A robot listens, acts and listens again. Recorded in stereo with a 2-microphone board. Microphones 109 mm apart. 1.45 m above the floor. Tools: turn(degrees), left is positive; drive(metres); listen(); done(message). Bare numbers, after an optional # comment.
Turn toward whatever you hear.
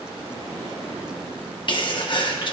# The sneeze: about 50° left or 130° left.
turn(50)
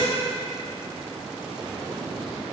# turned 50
listen()
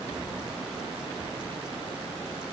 done("I heard a sneeze, but can't make it out now. It was about straight ahead or 80° left.")